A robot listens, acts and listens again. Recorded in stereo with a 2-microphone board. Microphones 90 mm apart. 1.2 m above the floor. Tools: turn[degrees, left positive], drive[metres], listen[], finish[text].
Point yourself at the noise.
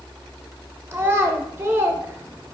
Thought: The child speaking: about 25° right or 155° right.
Action: turn[-25]
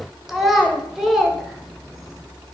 Action: finish[Facing the child speaking, under 1 m away.]